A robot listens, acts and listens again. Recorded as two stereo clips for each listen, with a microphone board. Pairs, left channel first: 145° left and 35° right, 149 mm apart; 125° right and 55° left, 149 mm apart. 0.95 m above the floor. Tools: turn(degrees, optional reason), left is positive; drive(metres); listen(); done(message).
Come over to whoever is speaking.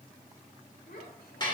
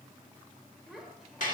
turn(degrees=145, reason="The child speaking: 145° left.")
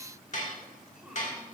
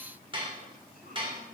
listen()
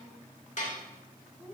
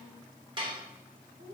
turn(degrees=50, reason="The child speaking is now 50° left.")
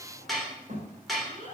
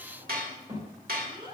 drive(metres=1.0)
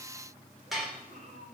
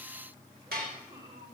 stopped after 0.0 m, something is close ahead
done("Something is in my way. I am facing the child speaking but have not reached it.")